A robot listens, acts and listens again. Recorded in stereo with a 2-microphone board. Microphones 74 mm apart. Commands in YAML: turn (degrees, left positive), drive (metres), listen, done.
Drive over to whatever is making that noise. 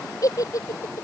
turn: 50
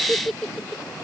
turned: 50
drive: 1.0
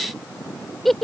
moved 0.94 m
drive: 1.0
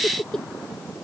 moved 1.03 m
turn: 10
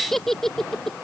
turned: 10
drive: 1.0
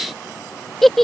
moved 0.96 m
drive: 1.0
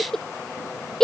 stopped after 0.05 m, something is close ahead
done: "Arrived at the giggle, straight ahead."